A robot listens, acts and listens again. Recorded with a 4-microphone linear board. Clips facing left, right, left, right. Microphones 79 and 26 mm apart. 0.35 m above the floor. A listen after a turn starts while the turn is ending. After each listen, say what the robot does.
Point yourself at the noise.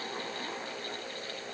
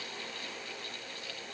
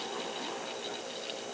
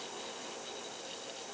Keep listening.
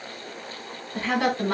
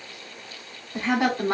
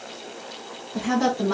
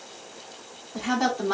Turn 20° right.
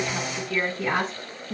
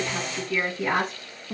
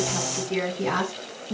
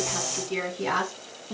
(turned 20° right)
Turn 30° right.
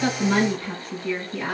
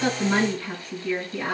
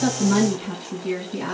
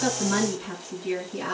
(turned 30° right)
Turn 20° left.
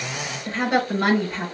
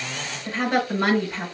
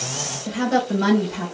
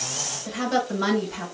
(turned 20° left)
Facing the woman speaking.